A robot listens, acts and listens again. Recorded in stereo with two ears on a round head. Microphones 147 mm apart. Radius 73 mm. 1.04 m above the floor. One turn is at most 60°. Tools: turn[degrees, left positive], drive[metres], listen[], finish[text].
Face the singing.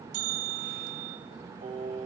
Thought: The singing: about 40° right or 140° right.
Action: turn[-40]
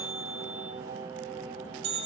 Thought: So it is at 100° right.
Action: turn[-60]
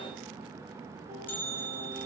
Thought: Nothing new. It was at 40° right.
Action: turn[-40]
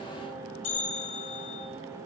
Action: listen[]
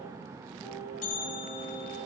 Thought: The singing is now 10° right.
Action: turn[-10]
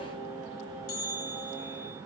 Action: finish[Facing the singing, over 4 m away.]